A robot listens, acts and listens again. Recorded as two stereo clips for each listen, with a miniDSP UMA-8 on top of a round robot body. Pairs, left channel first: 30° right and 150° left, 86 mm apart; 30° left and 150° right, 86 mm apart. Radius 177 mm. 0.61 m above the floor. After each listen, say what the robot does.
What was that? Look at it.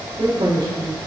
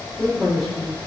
Turn 115° left.
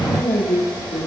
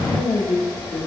Facing the man speaking.